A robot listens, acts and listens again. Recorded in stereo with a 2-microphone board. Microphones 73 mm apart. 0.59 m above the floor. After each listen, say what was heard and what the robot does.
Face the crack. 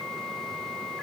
Keep listening.
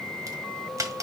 The crack: about 50° right or 130° right. Turn 50° right.
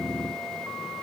Keep listening.
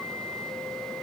I heard a crack, but can't make it out now. It was about straight ahead or 80° right.